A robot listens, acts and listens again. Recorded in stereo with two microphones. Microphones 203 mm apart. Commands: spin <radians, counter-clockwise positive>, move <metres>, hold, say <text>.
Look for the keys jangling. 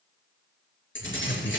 spin 1.57
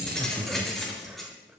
say Found it: keys jangling, straight ahead, over 4 m away.